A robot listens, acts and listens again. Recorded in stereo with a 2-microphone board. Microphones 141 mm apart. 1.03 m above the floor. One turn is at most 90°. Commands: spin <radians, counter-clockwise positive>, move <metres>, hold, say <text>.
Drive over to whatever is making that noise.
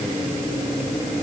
hold
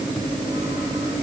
hold
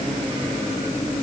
say I can't make out anything to turn to.